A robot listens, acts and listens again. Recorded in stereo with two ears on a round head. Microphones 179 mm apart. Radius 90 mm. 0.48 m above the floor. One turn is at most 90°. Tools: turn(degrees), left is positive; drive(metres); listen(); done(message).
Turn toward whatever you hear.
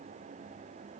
listen()
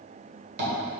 turn(degrees=-55)
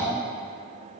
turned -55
turn(degrees=-15)
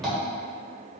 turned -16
done("Found it: tapping, straight ahead.")